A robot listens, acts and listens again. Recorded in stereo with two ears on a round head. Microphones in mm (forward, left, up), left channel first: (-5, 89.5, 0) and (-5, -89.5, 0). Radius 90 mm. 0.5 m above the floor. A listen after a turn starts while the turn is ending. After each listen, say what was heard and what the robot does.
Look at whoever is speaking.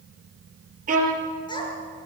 The child speaking: about 25° left or 155° left. Turn 25° left.
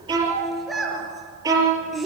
Found it: a child speaking, straight ahead.